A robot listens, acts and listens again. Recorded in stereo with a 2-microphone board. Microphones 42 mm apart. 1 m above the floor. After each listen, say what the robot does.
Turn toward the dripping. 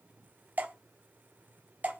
Turn 55° right.
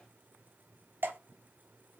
Turn 65° right.
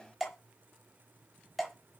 Facing the dripping, 1 to 2 m away.